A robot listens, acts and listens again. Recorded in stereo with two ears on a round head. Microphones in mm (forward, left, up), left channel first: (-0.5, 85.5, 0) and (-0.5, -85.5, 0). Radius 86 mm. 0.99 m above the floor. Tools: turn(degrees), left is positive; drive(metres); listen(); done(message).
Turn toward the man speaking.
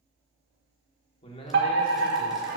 turn(degrees=30)
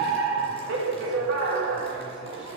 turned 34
listen()
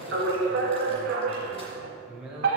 done("Found it: a man speaking, straight ahead.")